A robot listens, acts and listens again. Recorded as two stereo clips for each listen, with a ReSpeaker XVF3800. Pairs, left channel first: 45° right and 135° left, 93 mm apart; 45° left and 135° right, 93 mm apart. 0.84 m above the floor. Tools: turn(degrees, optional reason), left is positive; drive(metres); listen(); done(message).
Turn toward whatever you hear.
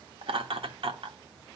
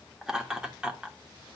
turn(degrees=150, reason="The laughter: 150° left.")
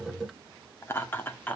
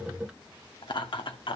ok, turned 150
turn(degrees=25, reason="The laughter is now 25° left.")
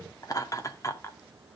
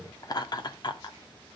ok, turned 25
turn(degrees=10, reason="The laughter is now 10° left.")
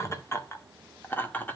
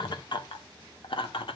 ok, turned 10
turn(degrees=25, reason="The laughter is now 25° left.")
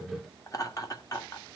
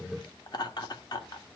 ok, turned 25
done("Found it: laughter, straight ahead, 2 to 4 m away.")